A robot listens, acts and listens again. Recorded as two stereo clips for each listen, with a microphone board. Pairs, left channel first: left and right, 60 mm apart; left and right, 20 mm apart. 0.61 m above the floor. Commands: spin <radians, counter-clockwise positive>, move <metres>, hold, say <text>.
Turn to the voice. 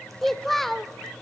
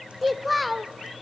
spin 0.52
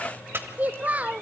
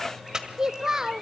spin -0.44
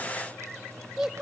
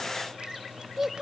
spin -0.17
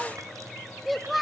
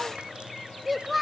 say Found it: a child speaking, straight ahead, under 1 m away.